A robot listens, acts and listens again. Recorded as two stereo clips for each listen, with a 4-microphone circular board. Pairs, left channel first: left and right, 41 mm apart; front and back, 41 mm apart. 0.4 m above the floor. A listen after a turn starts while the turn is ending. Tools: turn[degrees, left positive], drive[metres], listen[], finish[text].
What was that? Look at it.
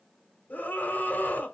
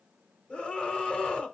Thought: The scream: 60° left.
Action: turn[60]
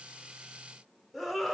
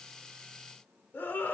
Action: finish[Found it: a scream, straight ahead, 1 to 2 m away.]